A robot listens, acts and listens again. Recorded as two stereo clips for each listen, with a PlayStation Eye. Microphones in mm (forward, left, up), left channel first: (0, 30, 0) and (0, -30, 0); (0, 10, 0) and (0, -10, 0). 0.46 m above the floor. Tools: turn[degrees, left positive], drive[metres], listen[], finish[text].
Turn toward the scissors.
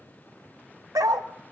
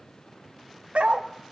Action: listen[]
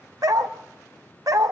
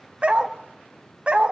Action: listen[]
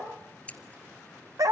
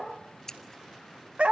Thought: The scissors: about 20° left or 160° left.
Action: turn[20]
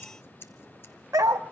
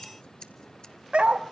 Thought: So it is at 140° left.
Action: turn[140]
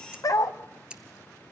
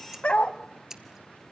Thought: The scissors is now 15° right.
Action: turn[-15]
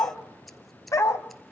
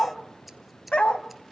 Action: finish[Facing the scissors, 1 to 2 m away.]